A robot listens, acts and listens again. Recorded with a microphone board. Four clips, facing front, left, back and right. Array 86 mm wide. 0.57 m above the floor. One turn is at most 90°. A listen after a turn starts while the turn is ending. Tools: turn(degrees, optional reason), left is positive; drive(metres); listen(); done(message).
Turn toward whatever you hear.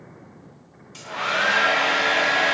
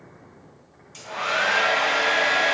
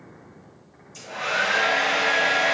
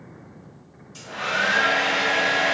turn(degrees=40, reason="The hair dryer: 40° left.")
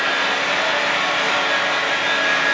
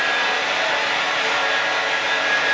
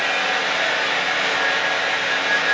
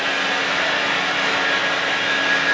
done("Found it: a hair dryer, straight ahead.")